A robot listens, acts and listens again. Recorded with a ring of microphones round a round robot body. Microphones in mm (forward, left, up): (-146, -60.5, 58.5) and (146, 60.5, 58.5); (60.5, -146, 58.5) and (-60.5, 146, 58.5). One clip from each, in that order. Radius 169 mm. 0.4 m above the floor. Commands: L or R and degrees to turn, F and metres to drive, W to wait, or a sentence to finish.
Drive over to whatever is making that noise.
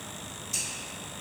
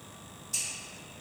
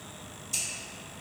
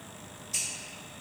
R80
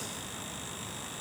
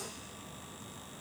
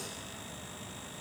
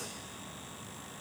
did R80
W
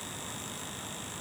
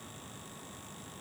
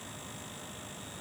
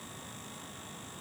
W
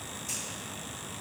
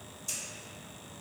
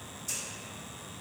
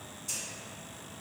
L10
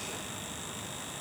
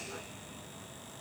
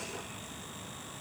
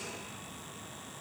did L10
W
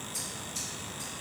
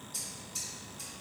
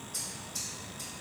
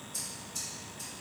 F1.0
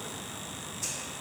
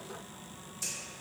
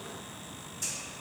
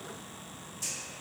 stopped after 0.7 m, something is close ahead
Arrived at the scissors, straight ahead.